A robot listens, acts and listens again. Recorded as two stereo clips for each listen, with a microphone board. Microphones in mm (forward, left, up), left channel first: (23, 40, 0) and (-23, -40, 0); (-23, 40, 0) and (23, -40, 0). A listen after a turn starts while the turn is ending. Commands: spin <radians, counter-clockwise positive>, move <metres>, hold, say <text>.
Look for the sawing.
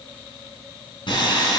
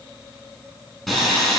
spin 0.52
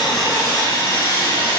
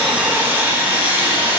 spin 0.17
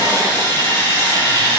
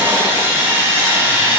say Facing the sawing.